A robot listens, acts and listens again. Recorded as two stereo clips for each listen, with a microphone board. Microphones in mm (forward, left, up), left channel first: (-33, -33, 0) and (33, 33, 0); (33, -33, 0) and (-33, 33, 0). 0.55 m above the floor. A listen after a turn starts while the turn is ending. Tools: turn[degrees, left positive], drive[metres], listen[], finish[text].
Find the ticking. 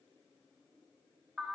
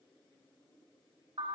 Action: listen[]
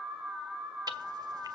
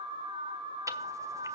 Thought: The ticking: 85° left.
Action: turn[85]
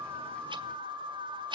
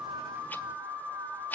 Thought: The ticking is now 25° left.
Action: turn[25]
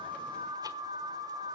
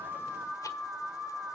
Action: listen[]
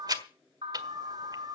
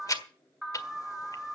Action: finish[Facing the ticking.]